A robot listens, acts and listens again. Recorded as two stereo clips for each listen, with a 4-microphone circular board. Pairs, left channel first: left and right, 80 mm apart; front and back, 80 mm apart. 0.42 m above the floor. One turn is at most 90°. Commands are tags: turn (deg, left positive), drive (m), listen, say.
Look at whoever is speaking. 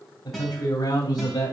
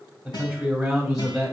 <turn deg="90"/>
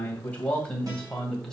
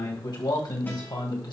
<say>Facing the man speaking.</say>